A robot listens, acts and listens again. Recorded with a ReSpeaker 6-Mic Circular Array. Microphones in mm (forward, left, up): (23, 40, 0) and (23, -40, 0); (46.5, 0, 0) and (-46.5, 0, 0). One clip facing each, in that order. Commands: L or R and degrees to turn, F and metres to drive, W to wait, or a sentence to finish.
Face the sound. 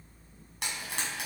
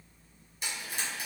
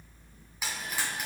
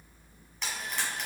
L85
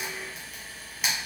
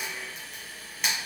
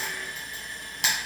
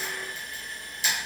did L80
Found it: frying, straight ahead.